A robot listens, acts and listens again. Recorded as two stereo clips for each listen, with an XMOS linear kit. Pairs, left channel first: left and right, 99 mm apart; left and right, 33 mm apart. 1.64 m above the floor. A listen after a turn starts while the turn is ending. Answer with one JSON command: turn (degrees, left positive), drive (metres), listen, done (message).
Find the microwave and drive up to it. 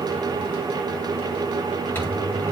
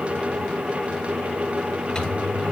{"turn": 20}
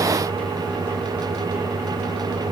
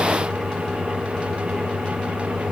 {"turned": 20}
{"drive": 1.0}
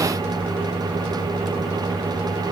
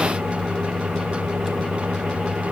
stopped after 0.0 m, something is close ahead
{"done": "Blocked. The microwave is further on, straight ahead."}